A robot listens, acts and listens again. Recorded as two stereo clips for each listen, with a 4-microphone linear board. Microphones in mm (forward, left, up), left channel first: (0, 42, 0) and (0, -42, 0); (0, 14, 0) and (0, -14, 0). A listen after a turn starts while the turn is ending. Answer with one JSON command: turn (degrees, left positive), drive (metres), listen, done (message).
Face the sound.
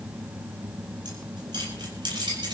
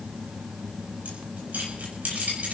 {"turn": -60}
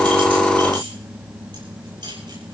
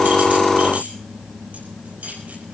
{"turn": -60}
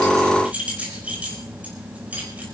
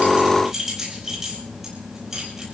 {"turn": -15}
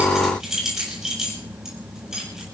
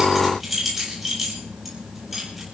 {"done": "Found it: keys jangling, straight ahead."}